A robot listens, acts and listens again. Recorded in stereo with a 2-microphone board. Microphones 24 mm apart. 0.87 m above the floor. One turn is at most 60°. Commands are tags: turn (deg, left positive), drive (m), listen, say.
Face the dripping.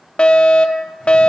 <listen/>
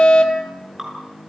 <turn deg="-20"/>
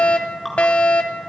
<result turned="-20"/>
<say>Facing the dripping.</say>